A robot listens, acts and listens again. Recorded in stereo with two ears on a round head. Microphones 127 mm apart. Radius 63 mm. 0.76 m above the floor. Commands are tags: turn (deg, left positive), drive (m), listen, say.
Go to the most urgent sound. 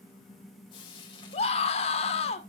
<turn deg="45"/>
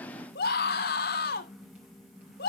<turn deg="85"/>
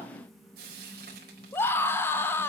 <turn deg="15"/>
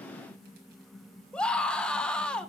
<drive m="1.0"/>
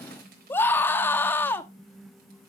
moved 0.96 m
<turn deg="15"/>
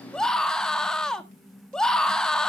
<drive m="1.0"/>
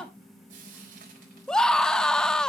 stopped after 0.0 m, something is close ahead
<say>I am next to the scream.</say>